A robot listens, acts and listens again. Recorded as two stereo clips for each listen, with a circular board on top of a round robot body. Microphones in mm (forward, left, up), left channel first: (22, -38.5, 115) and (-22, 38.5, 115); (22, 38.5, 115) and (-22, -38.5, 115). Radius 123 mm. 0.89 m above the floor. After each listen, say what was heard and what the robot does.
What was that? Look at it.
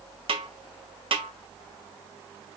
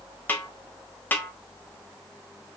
The snare drum: 130° left. Turn 130° left.
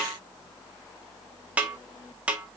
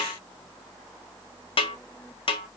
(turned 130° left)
The snare drum is now 45° left. Turn 45° left.
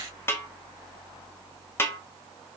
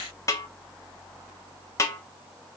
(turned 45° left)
Found it: a snare drum, straight ahead, 1 to 2 m away.